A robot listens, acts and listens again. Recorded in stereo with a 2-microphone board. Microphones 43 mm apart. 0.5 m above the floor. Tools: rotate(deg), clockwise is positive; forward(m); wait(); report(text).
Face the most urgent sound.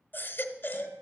rotate(-55)
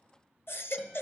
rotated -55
rotate(-65)
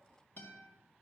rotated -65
wait()
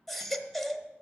report("Facing the baby crying.")